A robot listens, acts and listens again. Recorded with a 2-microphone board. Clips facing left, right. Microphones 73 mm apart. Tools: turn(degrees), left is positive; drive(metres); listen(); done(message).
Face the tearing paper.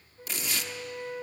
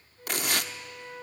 turn(degrees=-60)
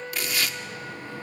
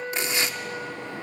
turn(degrees=-30)
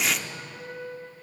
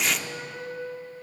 done("Facing the tearing paper, under 1 m away.")